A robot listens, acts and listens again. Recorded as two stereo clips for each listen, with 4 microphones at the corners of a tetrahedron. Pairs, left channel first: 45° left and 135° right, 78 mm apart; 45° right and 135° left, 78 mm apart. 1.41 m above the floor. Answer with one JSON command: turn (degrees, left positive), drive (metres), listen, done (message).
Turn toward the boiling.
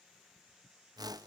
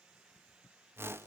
{"listen": true}
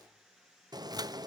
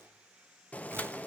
{"turn": -115}
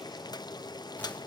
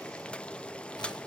{"turn": 30}
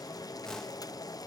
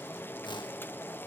{"turn": 15}
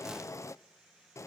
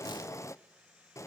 {"done": "Facing the boiling, under 1 m away."}